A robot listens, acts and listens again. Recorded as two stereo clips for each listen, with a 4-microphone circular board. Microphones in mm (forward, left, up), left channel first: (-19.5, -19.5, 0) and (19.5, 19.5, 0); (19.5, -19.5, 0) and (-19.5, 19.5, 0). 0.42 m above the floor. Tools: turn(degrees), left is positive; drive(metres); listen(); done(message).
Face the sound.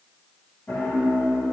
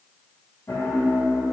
turn(degrees=-80)
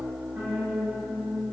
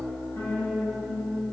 turn(degrees=-15)
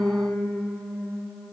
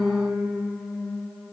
done("Facing the piano.")